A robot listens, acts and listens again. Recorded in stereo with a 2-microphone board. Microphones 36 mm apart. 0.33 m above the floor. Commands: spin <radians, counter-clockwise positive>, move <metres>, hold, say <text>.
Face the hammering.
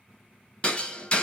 spin 0.44
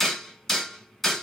say Found it: hammering, straight ahead, 1 to 2 m away.